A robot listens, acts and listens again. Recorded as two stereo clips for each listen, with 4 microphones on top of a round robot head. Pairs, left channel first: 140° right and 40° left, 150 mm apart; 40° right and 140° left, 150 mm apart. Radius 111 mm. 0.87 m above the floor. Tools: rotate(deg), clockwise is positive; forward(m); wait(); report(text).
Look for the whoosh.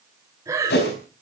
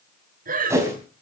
rotate(145)
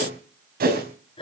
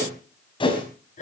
rotate(-20)
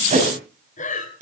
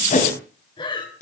report("Facing the whoosh, over 4 m away.")